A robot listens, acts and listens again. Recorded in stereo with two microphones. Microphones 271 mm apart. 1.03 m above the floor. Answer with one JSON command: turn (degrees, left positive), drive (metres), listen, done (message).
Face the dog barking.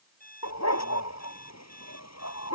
{"turn": 70}
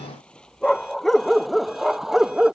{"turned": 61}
{"done": "Facing the dog barking."}